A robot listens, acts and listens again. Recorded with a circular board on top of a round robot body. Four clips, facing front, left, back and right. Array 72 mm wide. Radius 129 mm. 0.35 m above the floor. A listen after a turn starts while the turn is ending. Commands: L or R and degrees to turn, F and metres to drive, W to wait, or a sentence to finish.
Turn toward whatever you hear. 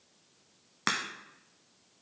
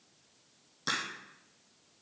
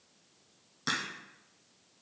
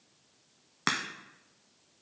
R50
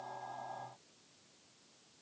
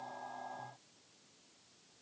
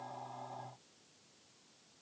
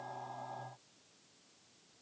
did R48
I heard a crack from this way, but can't make it out now.